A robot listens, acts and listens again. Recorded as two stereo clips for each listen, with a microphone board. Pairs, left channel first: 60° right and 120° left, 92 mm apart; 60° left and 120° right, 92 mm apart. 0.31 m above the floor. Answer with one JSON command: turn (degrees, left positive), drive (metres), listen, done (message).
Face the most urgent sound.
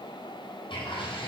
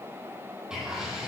{"listen": true}
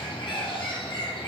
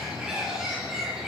{"listen": true}
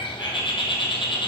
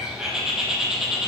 {"done": "I can't make out anything urgent to turn to."}